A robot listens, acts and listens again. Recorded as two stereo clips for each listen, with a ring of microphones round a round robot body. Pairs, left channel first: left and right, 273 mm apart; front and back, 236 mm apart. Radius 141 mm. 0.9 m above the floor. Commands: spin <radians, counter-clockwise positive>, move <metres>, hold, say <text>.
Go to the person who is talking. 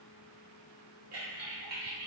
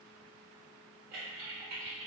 hold
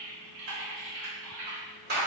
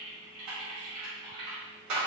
hold
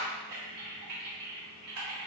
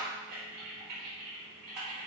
say I can't make out anyone speaking to turn to.